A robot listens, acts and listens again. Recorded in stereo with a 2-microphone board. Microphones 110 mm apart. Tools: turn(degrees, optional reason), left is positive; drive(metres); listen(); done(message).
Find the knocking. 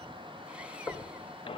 turn(degrees=20, reason="The knocking: about 20° left or 160° left.")
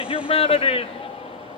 listen()
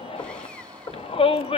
turn(degrees=135, reason="So it is at 135° left.")
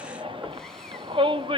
turn(degrees=-25, reason="The knocking is now 25° right.")
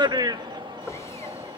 done("Found it: knocking, straight ahead.")